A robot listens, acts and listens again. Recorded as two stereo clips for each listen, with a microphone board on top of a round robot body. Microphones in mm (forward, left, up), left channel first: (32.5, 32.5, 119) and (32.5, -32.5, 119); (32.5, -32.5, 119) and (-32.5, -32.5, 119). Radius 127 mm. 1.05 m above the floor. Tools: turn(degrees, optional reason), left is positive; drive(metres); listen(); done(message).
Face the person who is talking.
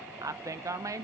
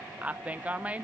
turn(degrees=-110, reason="The woman speaking: 110° right.")
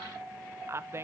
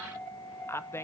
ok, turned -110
turn(degrees=-45, reason="The woman speaking is now 45° right.")
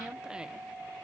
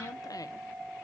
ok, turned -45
listen()
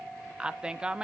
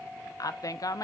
turn(degrees=-15, reason="The woman speaking is now 15° right.")
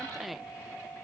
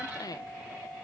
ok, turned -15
done("Found it: a woman speaking, straight ahead, under 1 m away.")